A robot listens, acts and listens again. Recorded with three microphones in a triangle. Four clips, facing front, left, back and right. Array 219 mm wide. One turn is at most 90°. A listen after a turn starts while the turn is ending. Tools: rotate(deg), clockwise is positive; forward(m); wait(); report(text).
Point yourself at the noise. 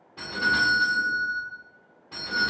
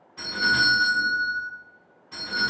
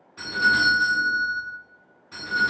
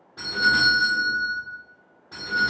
rotate(35)
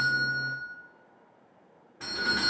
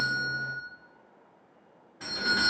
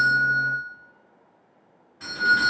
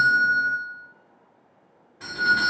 report("Facing the doorbell.")